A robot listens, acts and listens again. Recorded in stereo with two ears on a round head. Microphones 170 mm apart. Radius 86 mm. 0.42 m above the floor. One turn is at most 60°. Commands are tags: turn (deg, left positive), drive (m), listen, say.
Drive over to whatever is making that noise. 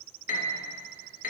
<turn deg="50"/>
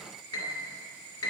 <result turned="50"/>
<turn deg="60"/>
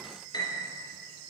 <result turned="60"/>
<turn deg="20"/>
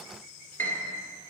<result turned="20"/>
<turn deg="10"/>
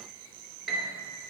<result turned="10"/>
<drive m="1.0"/>
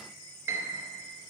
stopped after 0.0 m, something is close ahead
<turn deg="-15"/>
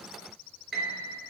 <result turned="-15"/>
<say>Something is in my way. I am facing the piano but have not reached it.</say>